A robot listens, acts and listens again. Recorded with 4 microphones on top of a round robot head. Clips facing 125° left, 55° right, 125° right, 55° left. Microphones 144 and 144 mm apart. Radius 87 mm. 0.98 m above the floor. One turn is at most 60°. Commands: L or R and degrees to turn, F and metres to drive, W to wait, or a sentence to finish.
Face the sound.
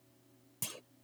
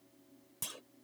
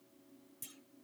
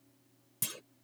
L45
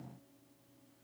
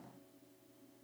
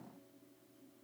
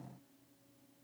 I heard a clunk from this way, but can't make it out now.